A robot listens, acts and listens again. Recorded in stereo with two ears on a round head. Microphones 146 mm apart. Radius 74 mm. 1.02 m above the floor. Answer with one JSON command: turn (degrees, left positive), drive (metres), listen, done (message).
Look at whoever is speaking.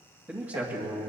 {"turn": -15}
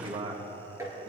{"turn": -40}
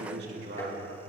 {"turn": -100}
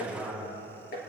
{"turn": 10}
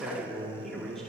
{"done": "Facing the man speaking, over 4 m away."}